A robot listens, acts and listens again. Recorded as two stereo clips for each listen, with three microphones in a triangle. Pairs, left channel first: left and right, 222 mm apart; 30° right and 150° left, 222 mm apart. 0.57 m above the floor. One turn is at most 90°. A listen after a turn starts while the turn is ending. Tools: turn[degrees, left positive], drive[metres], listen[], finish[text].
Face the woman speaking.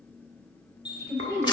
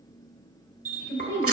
Thought: The woman speaking: 15° right.
Action: turn[-15]
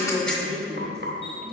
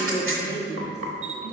Action: finish[Found it: a woman speaking, straight ahead.]